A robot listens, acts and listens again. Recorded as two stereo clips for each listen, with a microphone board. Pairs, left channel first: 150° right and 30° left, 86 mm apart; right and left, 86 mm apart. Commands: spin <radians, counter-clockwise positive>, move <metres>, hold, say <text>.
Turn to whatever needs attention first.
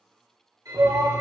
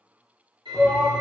spin -0.17
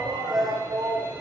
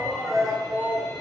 say Found it: a shout, straight ahead.